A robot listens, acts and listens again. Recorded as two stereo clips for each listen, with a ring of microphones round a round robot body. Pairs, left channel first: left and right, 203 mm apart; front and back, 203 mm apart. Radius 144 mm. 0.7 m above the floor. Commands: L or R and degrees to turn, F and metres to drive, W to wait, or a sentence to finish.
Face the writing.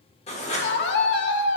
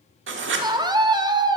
L155
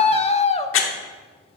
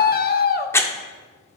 L80
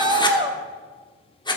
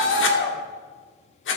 L20
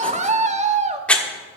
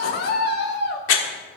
Facing the writing.